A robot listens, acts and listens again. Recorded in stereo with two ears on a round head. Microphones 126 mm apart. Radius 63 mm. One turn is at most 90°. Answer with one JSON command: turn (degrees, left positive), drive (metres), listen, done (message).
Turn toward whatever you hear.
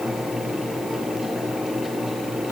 {"listen": true}
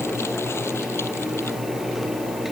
{"listen": true}
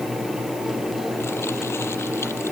{"done": "I can't make out anything to turn to."}